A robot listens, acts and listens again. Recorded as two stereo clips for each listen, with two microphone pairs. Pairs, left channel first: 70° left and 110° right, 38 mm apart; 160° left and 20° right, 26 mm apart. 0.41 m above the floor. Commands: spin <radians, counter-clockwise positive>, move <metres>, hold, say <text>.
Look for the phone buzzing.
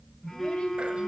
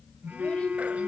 spin -0.17
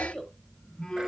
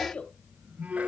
say Facing the phone buzzing.